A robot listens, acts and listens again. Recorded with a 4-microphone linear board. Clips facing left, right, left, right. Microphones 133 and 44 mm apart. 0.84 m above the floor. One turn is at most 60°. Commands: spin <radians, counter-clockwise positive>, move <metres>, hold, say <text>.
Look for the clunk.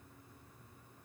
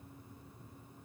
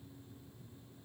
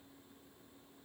hold
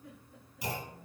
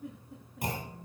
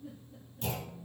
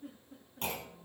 spin -0.87
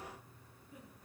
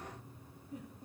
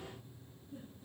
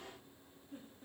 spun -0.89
hold
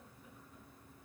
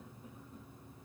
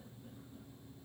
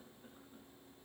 say I heard a clunk, but can't make it out now. It was about straight ahead or 75° right.